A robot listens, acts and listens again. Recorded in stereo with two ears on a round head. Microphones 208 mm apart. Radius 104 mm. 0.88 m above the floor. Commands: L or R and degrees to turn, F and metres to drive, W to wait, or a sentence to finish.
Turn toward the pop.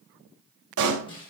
R65
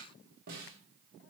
W
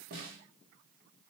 I heard a pop, but can't make it out now. It was about straight ahead or 50° right.